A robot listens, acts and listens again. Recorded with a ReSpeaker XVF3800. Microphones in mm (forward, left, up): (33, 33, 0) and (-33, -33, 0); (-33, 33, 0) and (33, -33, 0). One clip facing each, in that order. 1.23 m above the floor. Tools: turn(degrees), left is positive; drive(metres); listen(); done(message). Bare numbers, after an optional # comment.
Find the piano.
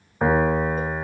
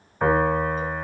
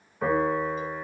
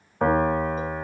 # The piano: 30° right.
turn(-30)
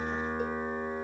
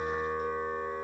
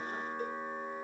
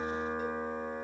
done("Facing the piano, 2 to 4 m away.")